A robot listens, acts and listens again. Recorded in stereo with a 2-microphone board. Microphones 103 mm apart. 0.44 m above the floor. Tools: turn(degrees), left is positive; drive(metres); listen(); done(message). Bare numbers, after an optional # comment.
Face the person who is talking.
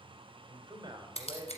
# The man speaking: about 40° right or 140° right.
turn(-40)
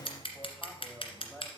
done("Facing the man speaking, 2 to 4 m away.")